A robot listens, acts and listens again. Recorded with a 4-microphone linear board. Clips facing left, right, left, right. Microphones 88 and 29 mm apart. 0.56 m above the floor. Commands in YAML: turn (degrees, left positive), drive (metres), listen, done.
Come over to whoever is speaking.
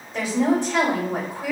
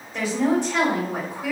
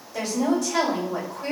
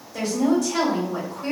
turn: 30
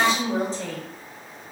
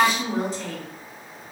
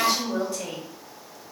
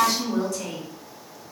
turn: 135
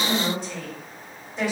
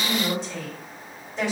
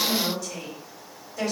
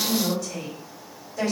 drive: 1.0
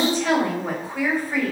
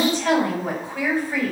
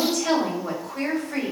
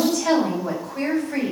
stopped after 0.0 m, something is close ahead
done: "Blocked. The woman speaking is further on, straight ahead."